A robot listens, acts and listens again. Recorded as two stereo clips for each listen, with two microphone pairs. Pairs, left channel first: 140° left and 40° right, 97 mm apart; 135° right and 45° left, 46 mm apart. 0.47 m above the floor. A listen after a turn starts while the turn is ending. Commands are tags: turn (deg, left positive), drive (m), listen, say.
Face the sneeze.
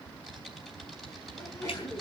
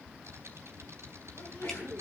<turn deg="-160"/>
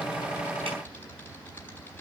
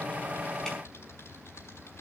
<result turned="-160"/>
<say>Facing where the sneeze came from. I can't hear it now.</say>